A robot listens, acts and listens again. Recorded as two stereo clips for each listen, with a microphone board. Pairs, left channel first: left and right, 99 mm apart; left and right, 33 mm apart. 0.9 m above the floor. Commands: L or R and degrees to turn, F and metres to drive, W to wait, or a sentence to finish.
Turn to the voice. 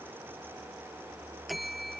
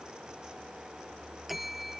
W
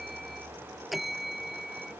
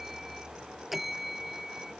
W
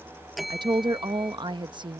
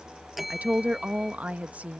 R50
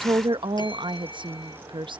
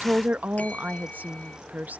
R70
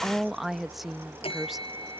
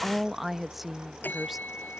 Facing the woman speaking.